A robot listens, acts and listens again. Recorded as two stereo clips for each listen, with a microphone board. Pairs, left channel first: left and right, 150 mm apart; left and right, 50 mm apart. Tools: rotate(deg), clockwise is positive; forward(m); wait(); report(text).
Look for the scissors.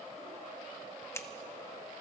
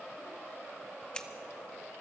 rotate(-20)
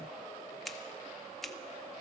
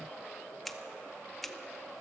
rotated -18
report("Facing the scissors.")